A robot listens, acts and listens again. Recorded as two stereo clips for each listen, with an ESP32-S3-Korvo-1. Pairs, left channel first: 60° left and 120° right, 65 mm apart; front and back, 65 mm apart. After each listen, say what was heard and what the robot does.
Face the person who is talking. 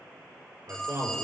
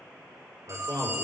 The man speaking: 155° right. Turn 155° right.
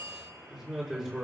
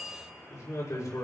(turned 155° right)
The man speaking is now 25° right. Turn 25° right.
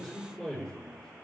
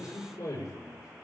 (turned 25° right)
The man speaking is now 10° right. Turn 10° right.
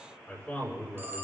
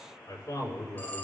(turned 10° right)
Found it: a man speaking, straight ahead, over 4 m away.